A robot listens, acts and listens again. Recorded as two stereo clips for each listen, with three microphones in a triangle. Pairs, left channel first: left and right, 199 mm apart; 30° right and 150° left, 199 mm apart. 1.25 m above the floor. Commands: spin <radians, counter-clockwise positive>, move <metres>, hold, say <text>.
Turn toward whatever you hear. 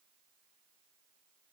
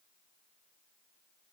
hold
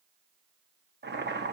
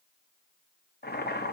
spin -1.13
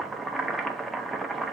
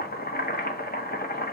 say Found it: boiling, straight ahead, under 1 m away.